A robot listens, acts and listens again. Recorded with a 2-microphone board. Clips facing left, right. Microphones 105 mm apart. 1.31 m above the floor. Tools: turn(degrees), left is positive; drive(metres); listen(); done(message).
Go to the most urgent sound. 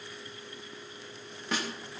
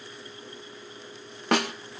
listen()
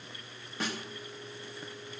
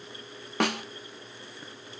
listen()
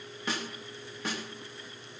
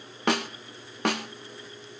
done("I can't make out anything urgent, only a snare drum.")